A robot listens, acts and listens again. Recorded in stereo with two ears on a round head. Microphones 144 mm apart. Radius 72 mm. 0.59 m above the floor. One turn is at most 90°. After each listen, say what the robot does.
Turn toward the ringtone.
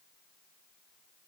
Keep listening.
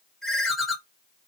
Turn 30° left.
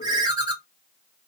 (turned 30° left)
Turn 30° right.
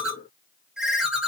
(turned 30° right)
Found it: a ringtone, straight ahead.